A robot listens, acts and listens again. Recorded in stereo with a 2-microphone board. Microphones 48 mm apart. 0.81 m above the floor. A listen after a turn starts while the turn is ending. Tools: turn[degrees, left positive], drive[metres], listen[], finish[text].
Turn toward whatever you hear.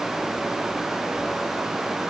Action: listen[]
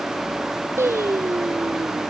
Thought: The singing: about 65° right or 115° right.
Action: turn[-65]
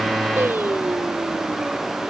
Thought: So it is at 45° right.
Action: turn[-45]
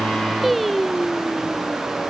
Action: finish[Found it: singing, straight ahead.]